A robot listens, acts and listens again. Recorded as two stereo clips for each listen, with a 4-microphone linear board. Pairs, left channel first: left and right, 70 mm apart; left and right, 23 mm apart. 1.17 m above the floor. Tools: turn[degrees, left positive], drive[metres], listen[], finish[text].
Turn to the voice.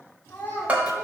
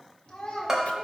Thought: The child speaking: about 30° left or 150° left.
Action: turn[30]
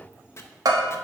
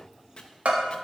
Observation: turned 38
Action: listen[]
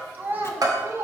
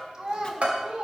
Thought: So it is at 40° right.
Action: turn[-40]
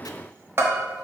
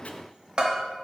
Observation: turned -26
Thought: Nothing new. It was at 15° right.
Action: turn[-15]
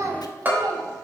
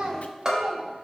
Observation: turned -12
Thought: The child speaking is now 65° right.
Action: turn[-65]
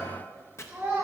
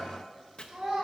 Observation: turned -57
Thought: The child speaking is now 30° right.
Action: turn[-30]
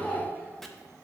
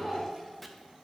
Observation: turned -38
Thought: The child speaking is now 10° left.
Action: turn[10]
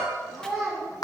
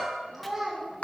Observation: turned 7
Action: finish[Facing the child speaking.]